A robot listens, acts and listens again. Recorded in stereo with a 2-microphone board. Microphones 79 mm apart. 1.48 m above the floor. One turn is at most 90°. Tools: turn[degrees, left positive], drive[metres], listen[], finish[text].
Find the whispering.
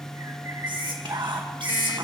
Action: turn[-90]
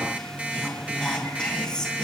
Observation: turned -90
Thought: So it is at 10° left.
Action: turn[10]
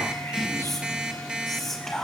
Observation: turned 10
Action: finish[Found it: whispering, straight ahead.]